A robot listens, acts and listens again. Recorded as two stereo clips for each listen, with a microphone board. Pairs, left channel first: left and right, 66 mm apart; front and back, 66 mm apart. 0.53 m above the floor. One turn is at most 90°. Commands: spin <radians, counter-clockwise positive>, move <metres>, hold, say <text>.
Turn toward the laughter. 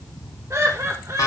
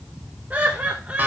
spin -1.57
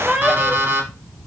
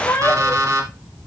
say Found it: laughter, straight ahead.